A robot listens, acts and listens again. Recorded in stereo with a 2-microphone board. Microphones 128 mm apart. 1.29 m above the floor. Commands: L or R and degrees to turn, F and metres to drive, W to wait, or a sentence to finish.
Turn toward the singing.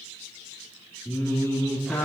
L20
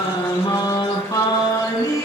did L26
L25
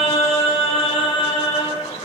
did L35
L135
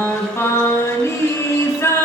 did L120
L20
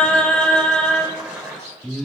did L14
Facing the singing, 2 to 4 m away.